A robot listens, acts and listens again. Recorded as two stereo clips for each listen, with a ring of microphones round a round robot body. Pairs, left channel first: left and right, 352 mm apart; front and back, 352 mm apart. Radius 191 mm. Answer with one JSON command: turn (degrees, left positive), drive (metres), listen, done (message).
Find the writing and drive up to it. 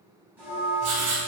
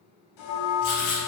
{"turn": -35}
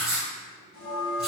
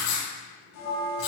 {"drive": 1.0}
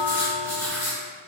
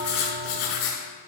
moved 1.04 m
{"drive": 1.0}
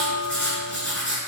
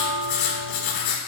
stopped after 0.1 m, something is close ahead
{"done": "I am next to the writing."}